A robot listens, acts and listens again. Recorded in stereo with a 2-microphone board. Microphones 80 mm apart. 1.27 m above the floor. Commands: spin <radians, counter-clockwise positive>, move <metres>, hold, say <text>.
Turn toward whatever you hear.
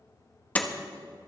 spin 0.35
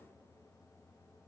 hold
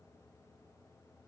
say I heard a door slam, but can't make it out now. It was about straight ahead or 140° left.